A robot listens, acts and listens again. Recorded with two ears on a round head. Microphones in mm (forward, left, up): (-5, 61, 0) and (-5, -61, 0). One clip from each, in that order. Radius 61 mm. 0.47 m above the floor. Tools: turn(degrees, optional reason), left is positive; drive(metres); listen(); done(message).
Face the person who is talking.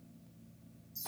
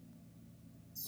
listen()
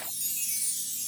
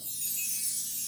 listen()
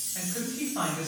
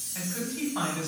turn(degrees=-40, reason="The man speaking: about 40° right or 140° right.")
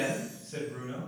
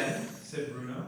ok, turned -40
turn(degrees=-10, reason="So it is at 10° right.")
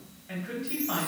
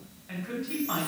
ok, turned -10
done("Found it: a man speaking, straight ahead.")